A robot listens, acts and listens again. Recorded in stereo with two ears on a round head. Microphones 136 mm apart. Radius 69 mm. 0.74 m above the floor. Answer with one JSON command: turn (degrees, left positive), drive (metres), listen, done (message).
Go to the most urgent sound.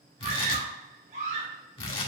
{"turn": -50}
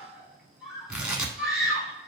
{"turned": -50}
{"drive": 1.0}
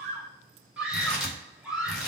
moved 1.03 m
{"drive": 1.0}
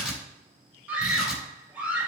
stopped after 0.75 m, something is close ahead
{"turn": -15}
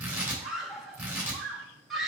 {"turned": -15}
{"done": "I am next to the scream."}